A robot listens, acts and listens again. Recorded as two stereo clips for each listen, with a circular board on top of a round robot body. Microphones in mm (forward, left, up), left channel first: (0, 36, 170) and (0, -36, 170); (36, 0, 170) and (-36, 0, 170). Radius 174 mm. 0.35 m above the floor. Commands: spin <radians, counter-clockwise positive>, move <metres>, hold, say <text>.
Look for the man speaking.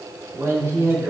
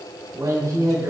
spin -2.44
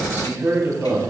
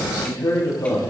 spin -0.61
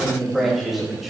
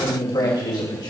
say Found it: a man speaking, straight ahead.